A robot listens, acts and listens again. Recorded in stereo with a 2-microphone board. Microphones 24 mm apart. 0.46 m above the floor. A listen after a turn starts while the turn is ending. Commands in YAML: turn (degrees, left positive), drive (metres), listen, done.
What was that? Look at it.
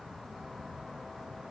listen: true
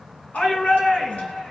turn: 90
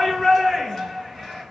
done: "Facing the shout, 2 to 4 m away."